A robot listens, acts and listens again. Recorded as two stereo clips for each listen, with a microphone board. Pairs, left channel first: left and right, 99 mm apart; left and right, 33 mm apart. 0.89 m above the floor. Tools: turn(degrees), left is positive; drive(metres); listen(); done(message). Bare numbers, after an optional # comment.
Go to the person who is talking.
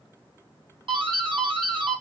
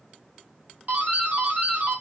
listen()
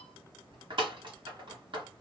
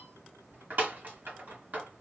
listen()
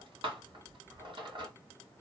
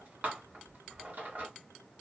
done("I can't make out anyone speaking, only a doorbell.")